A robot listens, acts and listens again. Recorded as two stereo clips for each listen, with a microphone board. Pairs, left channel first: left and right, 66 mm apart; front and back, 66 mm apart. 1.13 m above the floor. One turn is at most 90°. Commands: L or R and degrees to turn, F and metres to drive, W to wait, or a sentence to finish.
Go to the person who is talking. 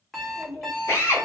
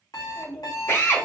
L90
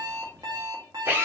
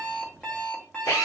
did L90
L25
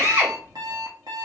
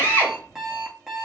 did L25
F1.0
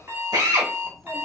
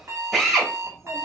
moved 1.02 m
F1.0
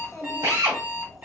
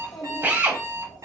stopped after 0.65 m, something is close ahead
I am next to the child speaking.